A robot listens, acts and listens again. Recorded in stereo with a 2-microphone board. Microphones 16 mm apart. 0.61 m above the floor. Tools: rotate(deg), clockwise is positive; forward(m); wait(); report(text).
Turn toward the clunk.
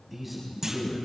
rotate(25)
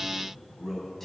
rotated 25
wait()
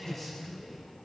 report("I heard a clunk, but can't make it out now. It was about straight ahead or 130° right.")